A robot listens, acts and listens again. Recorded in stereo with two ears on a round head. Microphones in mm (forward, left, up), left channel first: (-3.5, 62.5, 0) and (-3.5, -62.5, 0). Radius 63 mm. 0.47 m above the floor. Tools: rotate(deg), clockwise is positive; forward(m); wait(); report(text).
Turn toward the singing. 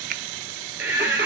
rotate(15)
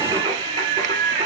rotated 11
rotate(40)
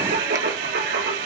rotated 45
rotate(90)
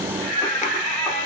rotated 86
report("Facing the singing, over 4 m away.")